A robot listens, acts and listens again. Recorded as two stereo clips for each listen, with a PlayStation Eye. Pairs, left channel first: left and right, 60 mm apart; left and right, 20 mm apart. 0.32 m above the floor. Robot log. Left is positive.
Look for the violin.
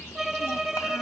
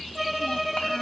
cmd yaw -30
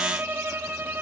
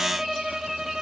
note: So it is at 150° right.
cmd yaw -150
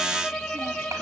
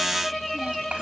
note: The violin is now 10° left.
cmd yaw +10
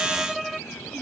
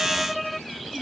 end: Found it: a violin, straight ahead.